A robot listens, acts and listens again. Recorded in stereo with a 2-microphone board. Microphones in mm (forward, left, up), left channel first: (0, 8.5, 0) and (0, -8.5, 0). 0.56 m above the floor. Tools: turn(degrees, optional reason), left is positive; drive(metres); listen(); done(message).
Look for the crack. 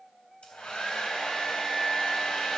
listen()
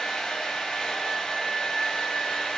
listen()
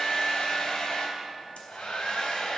done("I can't make out a crack, only a hair dryer.")